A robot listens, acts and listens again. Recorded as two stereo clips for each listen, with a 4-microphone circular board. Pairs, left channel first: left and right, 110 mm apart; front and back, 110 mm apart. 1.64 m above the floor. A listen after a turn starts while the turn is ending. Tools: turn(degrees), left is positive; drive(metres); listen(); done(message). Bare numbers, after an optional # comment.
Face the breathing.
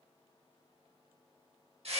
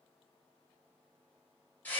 listen()
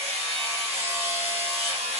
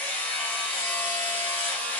listen()
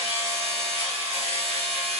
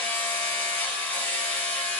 done("I can't make out breathing to turn to.")